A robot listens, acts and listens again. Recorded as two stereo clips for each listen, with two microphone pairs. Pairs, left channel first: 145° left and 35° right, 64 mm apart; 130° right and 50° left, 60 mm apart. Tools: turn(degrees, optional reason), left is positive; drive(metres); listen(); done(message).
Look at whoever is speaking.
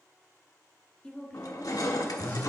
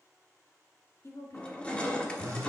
turn(degrees=-145, reason="The woman speaking: 145° right.")
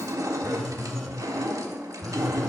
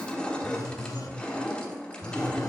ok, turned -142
listen()
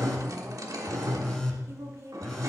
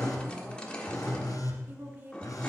done("Found it: a woman speaking, straight ahead.")